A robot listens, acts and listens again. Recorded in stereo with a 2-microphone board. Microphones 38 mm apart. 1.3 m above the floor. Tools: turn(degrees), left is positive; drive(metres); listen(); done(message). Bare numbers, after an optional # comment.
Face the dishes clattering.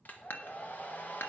turn(90)
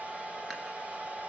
listen()
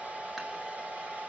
listen()
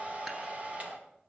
done("Facing where the dishes clattering came from. I can't hear it now.")